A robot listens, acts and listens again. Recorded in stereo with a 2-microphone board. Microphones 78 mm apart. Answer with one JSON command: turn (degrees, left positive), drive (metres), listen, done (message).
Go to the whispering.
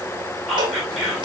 {"turn": 30}
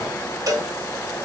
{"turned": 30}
{"listen": true}
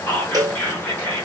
{"turn": 150}
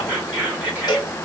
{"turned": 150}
{"turn": -20}
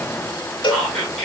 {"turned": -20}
{"drive": 1.0}
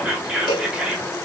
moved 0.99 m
{"turn": -15}
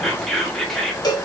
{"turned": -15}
{"drive": 1.0}
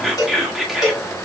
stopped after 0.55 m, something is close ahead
{"done": "Arrived at the whispering, straight ahead."}